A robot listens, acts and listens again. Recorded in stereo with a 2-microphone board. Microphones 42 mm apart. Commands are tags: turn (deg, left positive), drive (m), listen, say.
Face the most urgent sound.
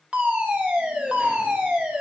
<turn deg="-35"/>
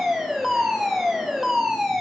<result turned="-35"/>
<say>Found it: a fire alarm, straight ahead.</say>